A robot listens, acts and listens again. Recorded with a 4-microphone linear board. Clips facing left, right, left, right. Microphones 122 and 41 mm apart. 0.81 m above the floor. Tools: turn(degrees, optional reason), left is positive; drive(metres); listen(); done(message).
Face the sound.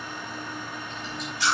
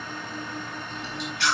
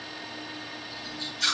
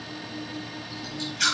turn(degrees=-70, reason="The chewing: about 70° right or 110° right.")
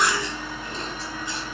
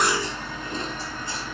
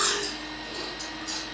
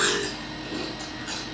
turn(degrees=-40, reason="So it is at 40° right.")
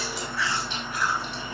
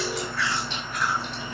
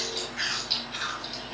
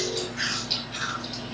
done("Found it: chewing, straight ahead.")